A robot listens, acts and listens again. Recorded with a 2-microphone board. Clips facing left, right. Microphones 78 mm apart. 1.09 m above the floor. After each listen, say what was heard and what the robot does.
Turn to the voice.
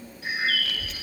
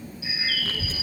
The child speaking: about 30° right or 150° right. Turn 30° right.
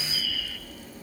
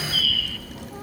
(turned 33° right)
So it is at 115° right. Turn 115° right.
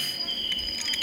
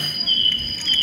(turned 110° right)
Facing the child speaking.